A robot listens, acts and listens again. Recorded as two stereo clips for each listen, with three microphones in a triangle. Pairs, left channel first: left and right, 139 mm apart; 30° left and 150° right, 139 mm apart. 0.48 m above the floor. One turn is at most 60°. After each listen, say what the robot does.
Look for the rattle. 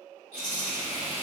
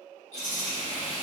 Turn 60° left.
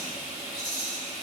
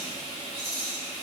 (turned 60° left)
Facing the rattle.